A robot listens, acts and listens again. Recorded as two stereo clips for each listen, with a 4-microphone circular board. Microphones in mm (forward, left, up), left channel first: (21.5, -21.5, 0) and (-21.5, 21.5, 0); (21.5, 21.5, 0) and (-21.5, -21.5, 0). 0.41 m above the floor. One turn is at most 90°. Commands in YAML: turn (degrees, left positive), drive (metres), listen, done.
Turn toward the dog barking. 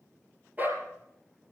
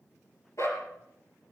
turn: 75
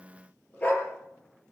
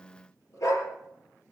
turn: 20
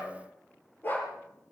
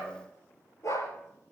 turn: 10
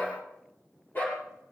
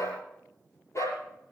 turn: 10
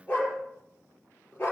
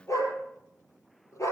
done: "Facing the dog barking, over 4 m away."